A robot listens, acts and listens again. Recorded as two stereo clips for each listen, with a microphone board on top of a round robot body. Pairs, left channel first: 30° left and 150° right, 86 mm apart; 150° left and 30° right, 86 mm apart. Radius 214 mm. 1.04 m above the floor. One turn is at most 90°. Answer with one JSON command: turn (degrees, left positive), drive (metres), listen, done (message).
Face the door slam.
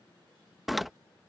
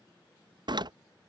{"turn": -60}
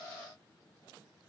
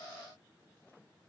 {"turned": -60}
{"done": "I heard a door slam from this way, but can't make it out now."}